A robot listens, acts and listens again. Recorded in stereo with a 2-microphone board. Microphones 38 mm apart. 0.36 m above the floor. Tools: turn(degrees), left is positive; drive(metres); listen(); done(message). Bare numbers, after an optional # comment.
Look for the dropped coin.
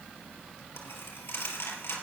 turn(90)
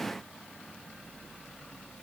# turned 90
done("Facing where the dropped coin came from. I can't hear it now.")